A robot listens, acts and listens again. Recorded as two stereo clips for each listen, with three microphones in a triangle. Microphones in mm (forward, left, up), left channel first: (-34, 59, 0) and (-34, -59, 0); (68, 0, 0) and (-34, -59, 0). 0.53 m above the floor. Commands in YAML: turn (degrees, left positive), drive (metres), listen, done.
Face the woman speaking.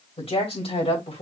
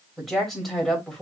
turn: 115
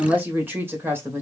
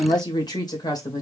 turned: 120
turn: -25
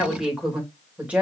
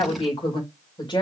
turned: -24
turn: -15
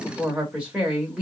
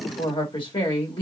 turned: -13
turn: -10
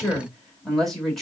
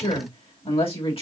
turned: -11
done: "Found it: a woman speaking, straight ahead, 2 to 4 m away."